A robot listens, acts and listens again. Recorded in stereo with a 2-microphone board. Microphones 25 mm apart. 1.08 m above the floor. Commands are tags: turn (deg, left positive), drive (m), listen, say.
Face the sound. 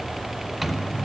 <turn deg="-30"/>
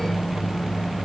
<turn deg="25"/>
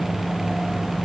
<say>Facing the microwave.</say>